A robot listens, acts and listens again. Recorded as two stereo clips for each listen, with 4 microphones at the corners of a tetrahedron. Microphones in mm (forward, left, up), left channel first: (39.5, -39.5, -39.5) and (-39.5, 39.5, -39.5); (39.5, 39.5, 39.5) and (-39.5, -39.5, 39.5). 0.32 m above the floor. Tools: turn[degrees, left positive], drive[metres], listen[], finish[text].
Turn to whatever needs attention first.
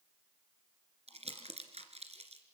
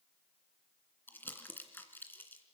Action: listen[]
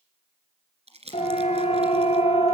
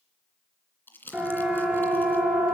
Thought: The siren: 60° right.
Action: turn[-60]
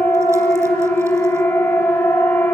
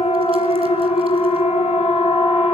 Thought: The siren is now 20° left.
Action: turn[20]
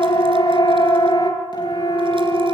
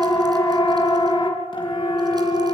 Action: finish[Found it: a siren, straight ahead.]